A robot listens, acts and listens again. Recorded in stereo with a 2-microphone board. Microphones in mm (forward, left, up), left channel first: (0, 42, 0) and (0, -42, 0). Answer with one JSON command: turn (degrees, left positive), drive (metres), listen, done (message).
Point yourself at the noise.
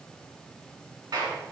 {"turn": -55}
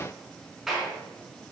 {"done": "Found it: a clap, straight ahead, 2 to 4 m away."}